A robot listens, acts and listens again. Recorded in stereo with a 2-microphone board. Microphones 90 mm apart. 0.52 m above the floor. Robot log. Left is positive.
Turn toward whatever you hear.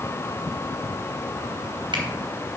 cmd idle
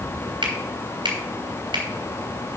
note: The finger snap: about 65° right or 115° right.
cmd yaw -65
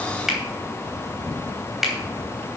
end: Found it: a finger snap, straight ahead.